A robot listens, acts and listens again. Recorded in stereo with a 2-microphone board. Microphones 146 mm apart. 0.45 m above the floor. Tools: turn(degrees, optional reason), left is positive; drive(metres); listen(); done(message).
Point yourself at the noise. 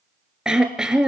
turn(degrees=-30)
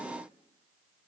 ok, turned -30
listen()
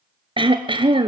turn(degrees=-145, reason="So it is at 145° right.")
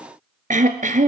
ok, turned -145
turn(degrees=-60, reason="The throat clearing is now 60° right.")
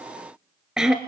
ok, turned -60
done("Facing the throat clearing, 1 to 2 m away.")